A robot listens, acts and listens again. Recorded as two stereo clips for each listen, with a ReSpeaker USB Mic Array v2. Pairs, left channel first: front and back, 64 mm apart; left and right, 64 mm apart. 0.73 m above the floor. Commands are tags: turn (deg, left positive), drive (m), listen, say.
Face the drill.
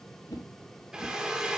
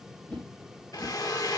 <turn deg="105"/>
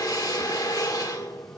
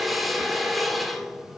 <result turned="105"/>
<say>Found it: a drill, straight ahead, 1 to 2 m away.</say>